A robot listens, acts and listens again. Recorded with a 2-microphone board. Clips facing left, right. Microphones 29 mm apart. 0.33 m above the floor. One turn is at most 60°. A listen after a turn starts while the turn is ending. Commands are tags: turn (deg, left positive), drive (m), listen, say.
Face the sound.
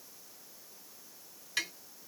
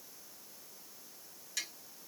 <turn deg="45"/>
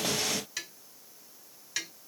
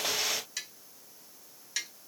<turn deg="10"/>
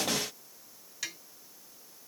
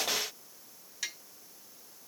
<say>Found it: tapping, straight ahead, 2 to 4 m away.</say>